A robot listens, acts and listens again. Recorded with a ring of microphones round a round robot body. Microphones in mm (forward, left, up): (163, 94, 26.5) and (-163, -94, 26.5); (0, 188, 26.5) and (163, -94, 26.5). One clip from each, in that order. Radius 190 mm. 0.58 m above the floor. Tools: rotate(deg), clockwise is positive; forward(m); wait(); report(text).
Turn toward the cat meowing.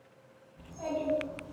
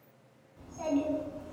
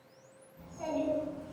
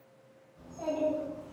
wait()
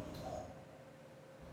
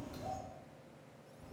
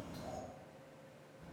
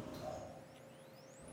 wait()
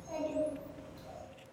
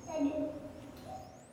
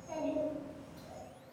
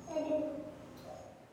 report("I can't make out a cat meowing, only a child speaking.")